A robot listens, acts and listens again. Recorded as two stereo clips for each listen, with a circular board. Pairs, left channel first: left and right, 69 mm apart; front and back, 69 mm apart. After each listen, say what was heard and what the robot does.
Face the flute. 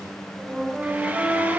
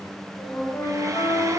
The flute: 20° right. Turn 20° right.
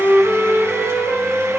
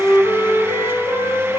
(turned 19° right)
Found it: a flute, straight ahead.